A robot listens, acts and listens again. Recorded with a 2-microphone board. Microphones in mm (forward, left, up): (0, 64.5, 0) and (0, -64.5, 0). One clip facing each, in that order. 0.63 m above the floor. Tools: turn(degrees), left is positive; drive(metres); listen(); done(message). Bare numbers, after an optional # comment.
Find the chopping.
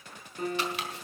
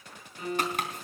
# The chopping: about 45° right or 135° right.
turn(-45)
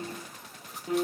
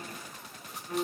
listen()
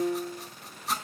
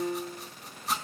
done("Found it: chopping, straight ahead.")